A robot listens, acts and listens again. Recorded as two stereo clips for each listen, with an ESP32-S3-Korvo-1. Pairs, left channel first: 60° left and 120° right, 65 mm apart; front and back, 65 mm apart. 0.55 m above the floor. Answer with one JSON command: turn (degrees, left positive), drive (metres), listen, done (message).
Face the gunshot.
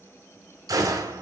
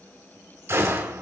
{"turn": -130}
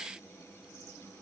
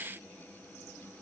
{"done": "I heard a gunshot from this way, but can't make it out now."}